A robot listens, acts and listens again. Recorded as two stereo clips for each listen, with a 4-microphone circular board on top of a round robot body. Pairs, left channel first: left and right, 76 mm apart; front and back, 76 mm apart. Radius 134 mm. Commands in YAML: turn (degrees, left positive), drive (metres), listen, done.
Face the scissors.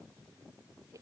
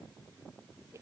listen: true
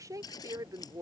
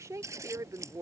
turn: 125
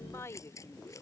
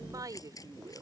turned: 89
turn: 40
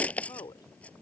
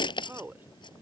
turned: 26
turn: 15
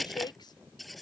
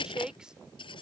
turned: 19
done: "Found it: scissors, straight ahead."